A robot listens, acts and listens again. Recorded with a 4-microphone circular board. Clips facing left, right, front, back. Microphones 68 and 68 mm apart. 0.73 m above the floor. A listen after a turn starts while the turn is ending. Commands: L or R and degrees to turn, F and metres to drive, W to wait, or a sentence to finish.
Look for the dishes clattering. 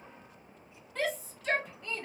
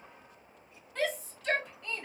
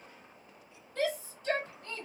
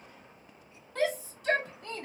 W
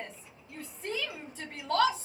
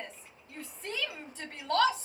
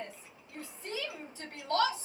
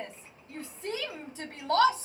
W
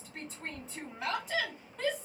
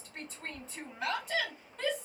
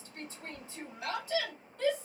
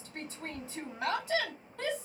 I can't make out dishes clattering to turn to.